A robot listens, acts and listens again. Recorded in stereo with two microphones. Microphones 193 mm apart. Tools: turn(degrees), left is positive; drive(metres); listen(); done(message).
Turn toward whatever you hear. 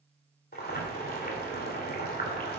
turn(degrees=50)
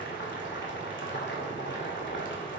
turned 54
turn(degrees=75)
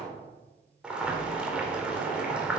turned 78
done("Found it: boiling, straight ahead.")